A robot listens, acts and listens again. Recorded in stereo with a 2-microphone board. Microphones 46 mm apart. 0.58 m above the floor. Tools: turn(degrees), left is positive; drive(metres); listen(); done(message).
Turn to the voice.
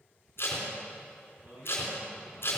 turn(degrees=-50)
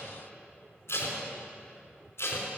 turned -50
listen()
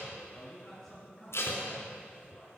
done("Found it: a man speaking, straight ahead.")